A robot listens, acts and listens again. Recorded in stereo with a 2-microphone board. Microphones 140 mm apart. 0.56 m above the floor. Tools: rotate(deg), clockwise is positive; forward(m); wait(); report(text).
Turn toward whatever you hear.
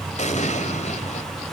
rotate(-55)
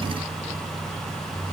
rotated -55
wait()
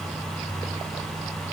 report("I heard an explosion, but can't make it out now. It was about straight ahead or 70° left.")